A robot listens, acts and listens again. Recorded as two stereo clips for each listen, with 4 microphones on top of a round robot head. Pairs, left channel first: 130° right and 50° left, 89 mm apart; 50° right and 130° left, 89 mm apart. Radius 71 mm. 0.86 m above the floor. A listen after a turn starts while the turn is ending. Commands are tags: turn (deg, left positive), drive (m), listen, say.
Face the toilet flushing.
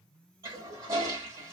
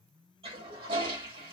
<turn deg="110"/>
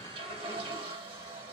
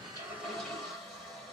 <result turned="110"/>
<turn deg="35"/>
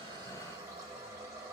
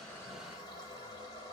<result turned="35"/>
<turn deg="-10"/>
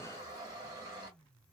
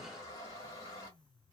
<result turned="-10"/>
<say>Facing the toilet flushing, 1 to 2 m away.</say>